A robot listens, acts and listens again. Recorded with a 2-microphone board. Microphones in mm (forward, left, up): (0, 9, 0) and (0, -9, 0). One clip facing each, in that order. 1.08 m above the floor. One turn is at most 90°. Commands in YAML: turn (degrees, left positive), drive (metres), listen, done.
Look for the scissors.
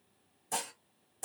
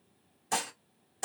listen: true
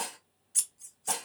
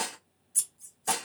turn: 35
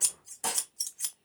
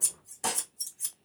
turn: 90
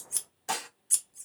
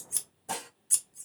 done: "Facing the scissors."